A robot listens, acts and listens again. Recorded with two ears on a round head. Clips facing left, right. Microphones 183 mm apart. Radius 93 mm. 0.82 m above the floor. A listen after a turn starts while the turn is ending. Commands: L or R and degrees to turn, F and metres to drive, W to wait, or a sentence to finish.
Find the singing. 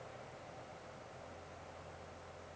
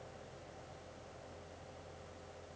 W
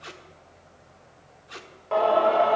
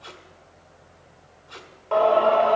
L30
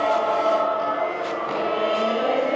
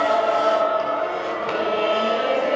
R30
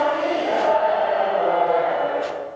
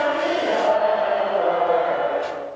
Found it: singing, straight ahead.